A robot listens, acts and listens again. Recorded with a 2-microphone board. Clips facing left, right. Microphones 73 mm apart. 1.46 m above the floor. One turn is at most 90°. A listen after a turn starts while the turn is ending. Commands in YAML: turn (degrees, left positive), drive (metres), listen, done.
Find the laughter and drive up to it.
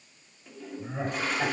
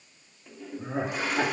turn: -90
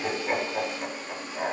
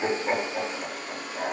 drive: 1.0
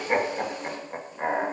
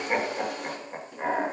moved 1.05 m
turn: 10
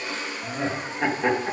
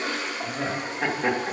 drive: 1.0
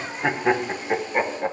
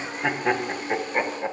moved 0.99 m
turn: 10
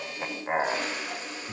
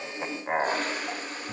drive: 1.0
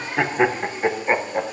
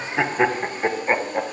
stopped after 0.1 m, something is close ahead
done: "I am next to the laughter."